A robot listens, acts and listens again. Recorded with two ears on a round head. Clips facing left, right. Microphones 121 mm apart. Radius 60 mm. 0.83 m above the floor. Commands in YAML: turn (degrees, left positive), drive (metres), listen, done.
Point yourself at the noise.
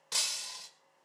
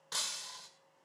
turn: 15
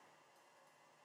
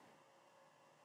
listen: true
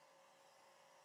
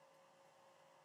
done: "I heard breaking glass, but can't make it out now. It was about straight ahead or 150° left."